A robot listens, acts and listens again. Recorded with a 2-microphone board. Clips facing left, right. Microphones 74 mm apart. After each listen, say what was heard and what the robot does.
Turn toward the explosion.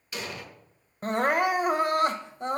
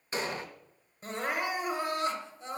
The explosion: about 35° right or 145° right. Turn 35° right.
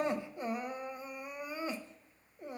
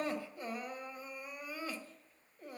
Keep listening.
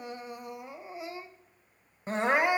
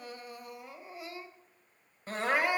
I heard an explosion, but can't make it out now. It was about straight ahead or 110° right.